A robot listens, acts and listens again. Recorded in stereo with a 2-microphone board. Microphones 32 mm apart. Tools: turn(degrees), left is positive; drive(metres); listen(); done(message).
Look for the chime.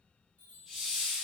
turn(degrees=60)
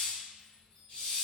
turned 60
turn(degrees=25)
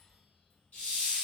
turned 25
listen()
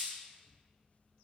listen()
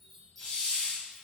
done("Found it: a chime, straight ahead.")